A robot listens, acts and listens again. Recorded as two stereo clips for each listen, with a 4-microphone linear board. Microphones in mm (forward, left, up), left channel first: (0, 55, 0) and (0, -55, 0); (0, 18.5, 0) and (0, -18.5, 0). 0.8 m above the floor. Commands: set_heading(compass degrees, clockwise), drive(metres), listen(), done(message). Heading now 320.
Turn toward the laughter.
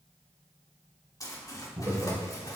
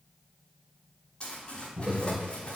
set_heading(335)
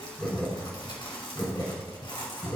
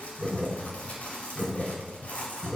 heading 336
set_heading(306)
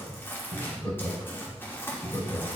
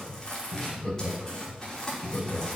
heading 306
set_heading(286)
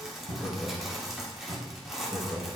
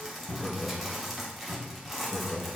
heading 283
done("Found it: laughter, straight ahead, 2 to 4 m away.")